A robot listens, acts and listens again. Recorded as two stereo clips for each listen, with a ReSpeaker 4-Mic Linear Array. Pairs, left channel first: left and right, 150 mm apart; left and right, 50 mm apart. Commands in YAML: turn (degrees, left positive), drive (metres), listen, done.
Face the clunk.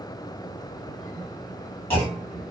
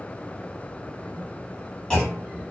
turn: 30
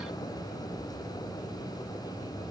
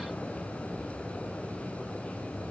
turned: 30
listen: true
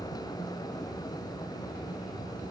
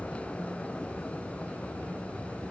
done: "I heard a clunk, but can't make it out now. It was about 15° right or 135° left."